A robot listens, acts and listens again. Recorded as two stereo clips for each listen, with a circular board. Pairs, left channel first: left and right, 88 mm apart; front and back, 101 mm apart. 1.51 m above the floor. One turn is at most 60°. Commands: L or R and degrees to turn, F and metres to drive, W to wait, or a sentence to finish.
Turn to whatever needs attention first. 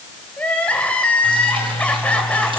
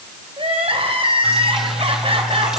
L60
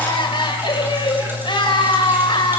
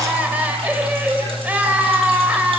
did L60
L60
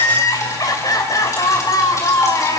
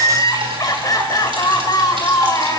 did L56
L50
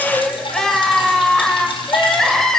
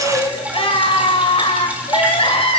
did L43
Found it: crying, straight ahead, 2 to 4 m away.